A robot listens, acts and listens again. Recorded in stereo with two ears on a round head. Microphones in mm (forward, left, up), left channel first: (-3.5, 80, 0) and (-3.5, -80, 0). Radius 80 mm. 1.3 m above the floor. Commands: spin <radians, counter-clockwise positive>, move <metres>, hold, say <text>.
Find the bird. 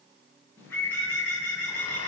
spin 0.52
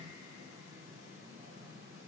hold
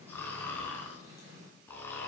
spin -0.35
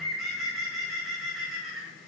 say Found it: a bird, straight ahead, over 4 m away.